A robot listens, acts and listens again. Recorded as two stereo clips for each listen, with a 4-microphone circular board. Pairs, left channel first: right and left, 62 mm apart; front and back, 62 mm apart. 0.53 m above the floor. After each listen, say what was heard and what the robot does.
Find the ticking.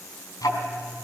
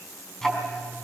The ticking: 80° right. Turn 80° right.
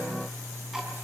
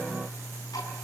The ticking is now 10° left. Turn 10° left.
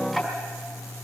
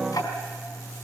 Found it: ticking, straight ahead, 2 to 4 m away.